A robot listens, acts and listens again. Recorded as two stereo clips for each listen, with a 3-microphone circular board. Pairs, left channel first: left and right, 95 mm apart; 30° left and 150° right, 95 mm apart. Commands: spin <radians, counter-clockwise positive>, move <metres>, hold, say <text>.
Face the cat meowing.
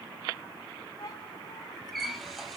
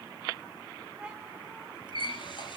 spin 2.27
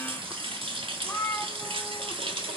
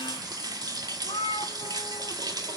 spin 0.35
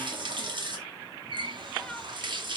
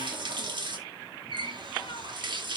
hold
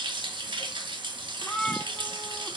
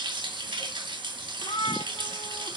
say Facing the cat meowing, 2 to 4 m away.